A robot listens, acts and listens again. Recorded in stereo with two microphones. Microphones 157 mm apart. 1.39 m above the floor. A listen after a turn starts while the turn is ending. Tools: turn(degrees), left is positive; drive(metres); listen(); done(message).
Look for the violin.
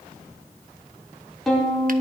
turn(degrees=30)
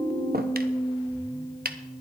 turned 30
turn(degrees=150)
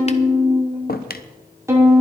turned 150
turn(degrees=-15)
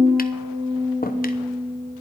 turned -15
done("Found it: a violin, straight ahead, over 4 m away.")